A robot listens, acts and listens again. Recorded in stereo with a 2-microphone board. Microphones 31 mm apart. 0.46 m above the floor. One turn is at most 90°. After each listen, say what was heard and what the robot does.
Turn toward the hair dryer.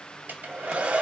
The hair dryer: about 65° right or 115° right. Turn 65° right.
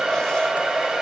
So it is at 10° right. Turn 10° right.
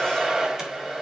Facing the hair dryer.